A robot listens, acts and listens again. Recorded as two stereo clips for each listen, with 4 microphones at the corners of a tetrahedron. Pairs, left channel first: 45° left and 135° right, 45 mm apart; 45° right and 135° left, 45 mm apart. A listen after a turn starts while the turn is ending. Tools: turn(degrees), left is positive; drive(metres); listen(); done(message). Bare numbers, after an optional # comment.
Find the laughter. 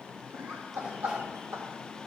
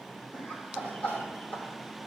# The laughter: 105° right.
turn(-105)
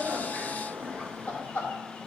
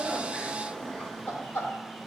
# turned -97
# The laughter is now 10° right.
turn(-10)
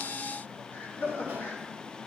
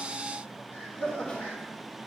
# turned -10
done("Found it: laughter, straight ahead.")